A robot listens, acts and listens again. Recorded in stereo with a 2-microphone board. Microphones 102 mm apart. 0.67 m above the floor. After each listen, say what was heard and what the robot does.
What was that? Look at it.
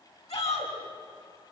The shout: about 70° left or 110° left. Turn 70° left.
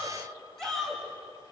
Found it: a shout, straight ahead, over 4 m away.